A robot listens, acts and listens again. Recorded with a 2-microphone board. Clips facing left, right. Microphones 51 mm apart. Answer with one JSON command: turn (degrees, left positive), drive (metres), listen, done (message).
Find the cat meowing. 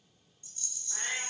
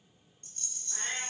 {"turn": 30}
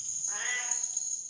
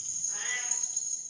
{"turn": 135}
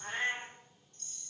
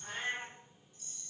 {"turn": 45}
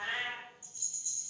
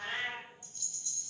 {"turn": 20}
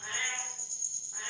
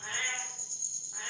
{"done": "Facing the cat meowing, 2 to 4 m away."}